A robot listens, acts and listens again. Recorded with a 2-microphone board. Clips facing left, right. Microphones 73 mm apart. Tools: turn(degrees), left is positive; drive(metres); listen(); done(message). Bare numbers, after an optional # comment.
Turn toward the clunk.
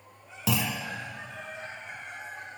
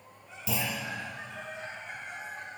turn(90)
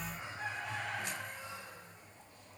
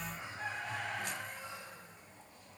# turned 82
# Nothing new. It was at 10° left.
turn(10)
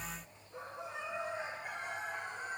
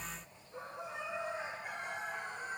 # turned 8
done("I heard a clunk from this way, but can't make it out now.")